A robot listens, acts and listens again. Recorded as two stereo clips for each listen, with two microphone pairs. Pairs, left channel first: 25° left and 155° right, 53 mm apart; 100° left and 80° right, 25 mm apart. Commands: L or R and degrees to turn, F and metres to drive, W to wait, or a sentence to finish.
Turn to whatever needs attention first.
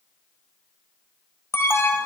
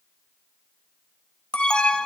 L55
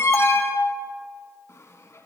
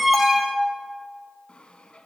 Found it: an alarm, straight ahead.